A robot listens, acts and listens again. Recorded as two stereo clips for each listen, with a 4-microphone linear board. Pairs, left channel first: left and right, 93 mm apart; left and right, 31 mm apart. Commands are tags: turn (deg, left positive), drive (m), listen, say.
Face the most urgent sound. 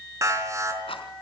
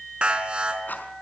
<turn deg="-35"/>
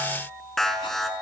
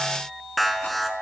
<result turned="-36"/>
<say>Found it: an alarm, straight ahead, over 4 m away.</say>